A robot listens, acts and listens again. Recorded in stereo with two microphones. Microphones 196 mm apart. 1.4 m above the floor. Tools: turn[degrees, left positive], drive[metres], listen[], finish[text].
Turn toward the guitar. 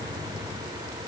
Action: listen[]
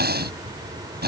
Action: listen[]
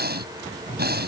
Action: finish[I can't make out a guitar, only breathing.]